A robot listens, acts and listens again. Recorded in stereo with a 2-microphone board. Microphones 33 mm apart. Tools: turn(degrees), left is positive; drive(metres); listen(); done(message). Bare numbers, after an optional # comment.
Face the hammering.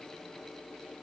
listen()
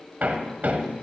# The hammering: about 65° right or 115° right.
turn(-65)
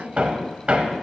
# So it is at 40° right.
turn(-40)
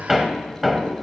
done("Facing the hammering.")